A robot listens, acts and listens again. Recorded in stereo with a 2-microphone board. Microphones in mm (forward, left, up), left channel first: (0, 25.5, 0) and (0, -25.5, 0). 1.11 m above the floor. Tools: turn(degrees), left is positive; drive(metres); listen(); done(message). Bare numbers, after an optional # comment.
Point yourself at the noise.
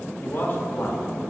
# The man speaking: about 50° left or 130° left.
turn(50)
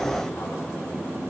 listen()
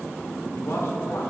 # So it is at 80° left.
turn(80)
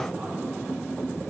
listen()
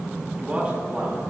# The man speaking is now 25° right.
turn(-25)
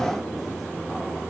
listen()
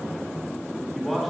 done("Facing the man speaking, 2 to 4 m away.")